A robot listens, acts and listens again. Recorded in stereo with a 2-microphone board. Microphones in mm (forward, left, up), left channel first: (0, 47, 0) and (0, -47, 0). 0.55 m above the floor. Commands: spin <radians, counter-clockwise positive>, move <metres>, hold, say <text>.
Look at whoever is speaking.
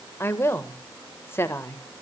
spin 0.44
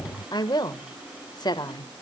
spin 2.18
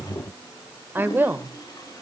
spin -0.44
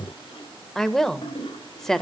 say Facing the woman speaking, 1 to 2 m away.